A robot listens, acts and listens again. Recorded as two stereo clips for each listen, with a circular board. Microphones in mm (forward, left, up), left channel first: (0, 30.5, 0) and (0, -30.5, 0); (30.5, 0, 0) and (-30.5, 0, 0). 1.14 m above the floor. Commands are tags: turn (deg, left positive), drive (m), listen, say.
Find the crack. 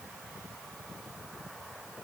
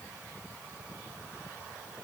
<listen/>
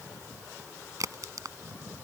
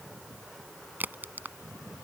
<turn deg="-120"/>
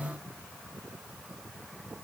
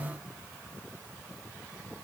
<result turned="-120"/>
<say>Facing where the crack came from. I can't hear it now.</say>